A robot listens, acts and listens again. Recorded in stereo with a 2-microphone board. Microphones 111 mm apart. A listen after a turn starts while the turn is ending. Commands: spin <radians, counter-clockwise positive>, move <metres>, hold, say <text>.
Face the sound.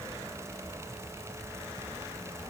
hold
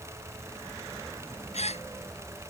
spin 1.31
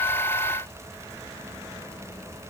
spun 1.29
hold
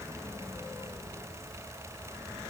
say I heard a gasp, but can't make it out now. It was about straight ahead or 30° left.